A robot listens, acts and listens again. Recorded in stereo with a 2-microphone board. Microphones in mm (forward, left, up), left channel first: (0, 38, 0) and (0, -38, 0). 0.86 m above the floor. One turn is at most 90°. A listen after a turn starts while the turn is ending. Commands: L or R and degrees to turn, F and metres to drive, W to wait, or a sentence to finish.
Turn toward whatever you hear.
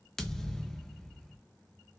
L30
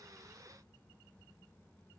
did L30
W
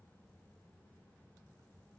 I heard a thud, but can't make it out now. It was about 25° right or 145° left.